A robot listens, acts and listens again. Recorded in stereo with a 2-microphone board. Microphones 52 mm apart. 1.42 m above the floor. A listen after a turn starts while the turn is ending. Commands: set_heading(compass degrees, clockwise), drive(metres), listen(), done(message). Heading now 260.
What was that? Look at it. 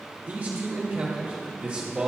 set_heading(285)
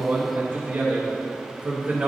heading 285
set_heading(305)
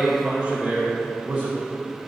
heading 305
set_heading(335)
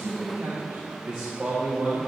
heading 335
set_heading(0)
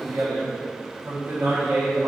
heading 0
set_heading(130)
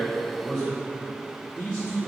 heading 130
set_heading(120)
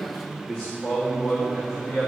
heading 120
done("Facing the man speaking.")